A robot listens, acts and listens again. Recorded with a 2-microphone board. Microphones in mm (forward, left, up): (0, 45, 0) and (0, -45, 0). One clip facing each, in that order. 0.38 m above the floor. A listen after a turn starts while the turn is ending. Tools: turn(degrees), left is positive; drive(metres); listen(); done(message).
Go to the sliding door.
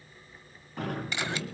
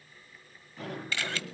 turn(degrees=65)
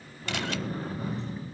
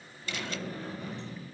turn(degrees=45)
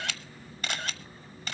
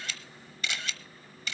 listen()
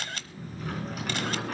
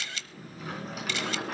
drive(metres=1.0)
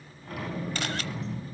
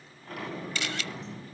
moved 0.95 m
drive(metres=1.0)
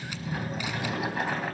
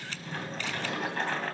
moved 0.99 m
turn(degrees=10)
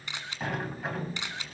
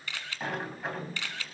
drive(metres=1.0)
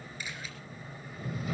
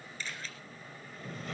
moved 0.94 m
turn(degrees=10)
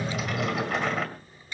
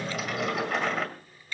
drive(metres=1.0)
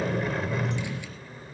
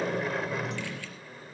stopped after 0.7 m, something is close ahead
done("I am next to the sliding door.")